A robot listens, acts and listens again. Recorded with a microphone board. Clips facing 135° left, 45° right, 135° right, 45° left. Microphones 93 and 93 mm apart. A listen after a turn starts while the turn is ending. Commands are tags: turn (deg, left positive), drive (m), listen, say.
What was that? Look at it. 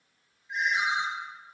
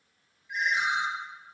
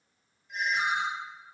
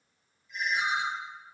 <turn deg="-155"/>
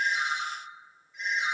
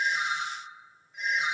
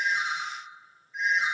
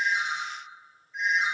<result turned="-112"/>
<turn deg="-45"/>
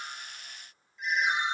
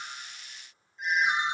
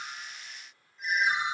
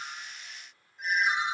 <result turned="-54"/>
<turn deg="10"/>
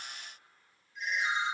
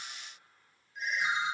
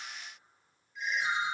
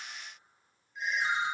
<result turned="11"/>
<say>Found it: a ringtone, straight ahead, 1 to 2 m away.</say>